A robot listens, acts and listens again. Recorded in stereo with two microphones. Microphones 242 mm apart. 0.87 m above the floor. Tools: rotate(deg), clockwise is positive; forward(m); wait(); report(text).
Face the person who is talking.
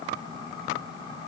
wait()
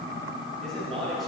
rotate(-30)
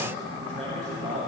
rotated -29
rotate(30)
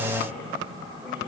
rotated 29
wait()
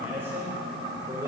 rotate(15)
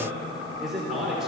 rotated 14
report("Facing the man speaking.")